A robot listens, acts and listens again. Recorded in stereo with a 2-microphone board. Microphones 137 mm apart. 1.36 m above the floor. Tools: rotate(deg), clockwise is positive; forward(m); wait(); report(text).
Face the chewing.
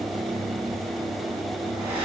wait()
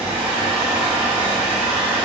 wait()
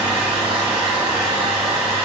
report("I can't make out chewing, only a hair dryer.")